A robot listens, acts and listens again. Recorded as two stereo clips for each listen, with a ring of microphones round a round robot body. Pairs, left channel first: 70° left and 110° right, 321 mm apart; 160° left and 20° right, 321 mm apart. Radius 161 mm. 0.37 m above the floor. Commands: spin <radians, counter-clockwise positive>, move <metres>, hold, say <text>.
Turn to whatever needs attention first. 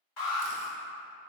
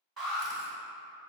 spin 1.13
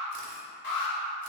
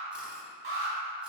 spin 0.61
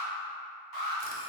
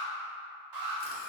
say Facing the alarm.